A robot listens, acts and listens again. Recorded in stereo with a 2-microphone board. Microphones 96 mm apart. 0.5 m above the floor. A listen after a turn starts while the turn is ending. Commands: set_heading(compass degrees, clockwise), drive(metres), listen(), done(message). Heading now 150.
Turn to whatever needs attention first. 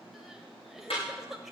set_heading(180)
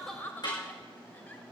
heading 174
set_heading(154)
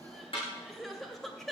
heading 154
done("Facing the crying.")